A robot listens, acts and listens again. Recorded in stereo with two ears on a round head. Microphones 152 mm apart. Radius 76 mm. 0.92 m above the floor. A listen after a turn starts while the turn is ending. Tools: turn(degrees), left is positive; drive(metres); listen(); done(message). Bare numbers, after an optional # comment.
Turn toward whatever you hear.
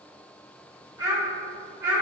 turn(-30)
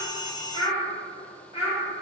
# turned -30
# So it is at 30° left.
turn(30)
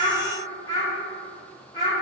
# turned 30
# The child speaking is now 25° left.
turn(25)
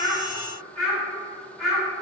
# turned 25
done("Facing the child speaking, 2 to 4 m away.")